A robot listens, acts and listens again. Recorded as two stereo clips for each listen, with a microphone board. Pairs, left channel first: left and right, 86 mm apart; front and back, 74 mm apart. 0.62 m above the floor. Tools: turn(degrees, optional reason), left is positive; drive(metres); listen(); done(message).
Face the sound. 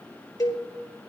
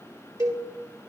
turn(degrees=140, reason="The cowbell: 140° left.")
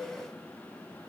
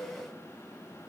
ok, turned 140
listen()
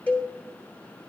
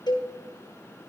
turn(degrees=20, reason="The cowbell is now 20° left.")
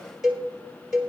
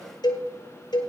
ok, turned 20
done("Facing the cowbell, 2 to 4 m away.")